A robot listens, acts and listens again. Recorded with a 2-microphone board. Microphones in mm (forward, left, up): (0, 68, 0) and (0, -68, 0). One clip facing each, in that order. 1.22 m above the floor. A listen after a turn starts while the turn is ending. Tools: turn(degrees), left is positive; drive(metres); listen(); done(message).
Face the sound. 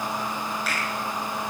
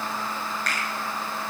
turn(degrees=30)
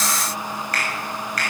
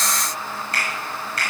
turn(degrees=-25)
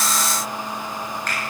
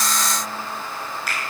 turn(degrees=-10)
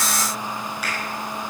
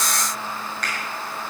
done("Found it: a finger snap, straight ahead.")